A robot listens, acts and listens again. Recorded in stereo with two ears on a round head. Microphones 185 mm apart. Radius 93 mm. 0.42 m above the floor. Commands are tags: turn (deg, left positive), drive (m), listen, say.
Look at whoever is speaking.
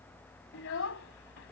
<turn deg="70"/>
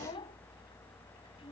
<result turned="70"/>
<turn deg="25"/>
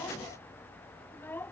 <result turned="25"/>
<turn deg="10"/>
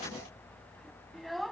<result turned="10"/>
<say>Found it: a child speaking, straight ahead.</say>